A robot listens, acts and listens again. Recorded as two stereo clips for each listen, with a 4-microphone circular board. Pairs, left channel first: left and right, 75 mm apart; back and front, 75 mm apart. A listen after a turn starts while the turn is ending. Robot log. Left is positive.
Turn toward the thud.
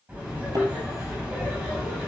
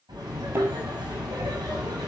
note: The thud: 60° right.
cmd yaw -60
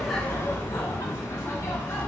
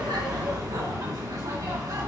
end: I heard a thud from this way, but can't make it out now.